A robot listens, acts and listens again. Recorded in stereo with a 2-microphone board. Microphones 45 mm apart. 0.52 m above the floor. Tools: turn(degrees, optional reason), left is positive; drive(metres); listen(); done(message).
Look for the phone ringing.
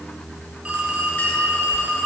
turn(degrees=-20, reason="The phone ringing: about 20° right or 160° right.")
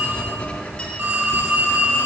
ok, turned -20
turn(degrees=-140, reason="So it is at 140° right.")
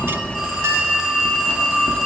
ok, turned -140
turn(degrees=-10, reason="The phone ringing is now 10° right.")
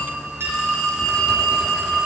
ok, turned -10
done("Found it: a phone ringing, straight ahead, 2 to 4 m away.")